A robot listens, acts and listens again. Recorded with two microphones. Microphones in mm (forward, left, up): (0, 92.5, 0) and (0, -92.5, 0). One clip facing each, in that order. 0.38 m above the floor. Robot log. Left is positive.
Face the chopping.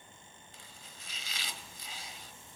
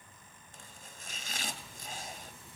note: The chopping: about 50° right or 130° right.
cmd yaw -50
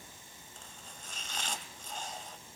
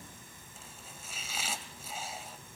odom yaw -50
end: Found it: chopping, straight ahead.